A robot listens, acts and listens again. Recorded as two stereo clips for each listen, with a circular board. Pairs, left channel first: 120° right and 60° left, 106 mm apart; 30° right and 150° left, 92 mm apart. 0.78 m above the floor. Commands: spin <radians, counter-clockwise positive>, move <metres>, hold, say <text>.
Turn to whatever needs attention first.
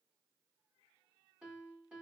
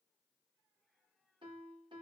hold
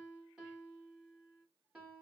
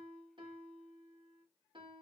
hold
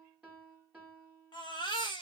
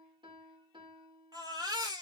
spin -2.88
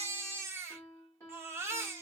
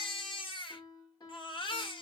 say Found it: a baby crying, straight ahead.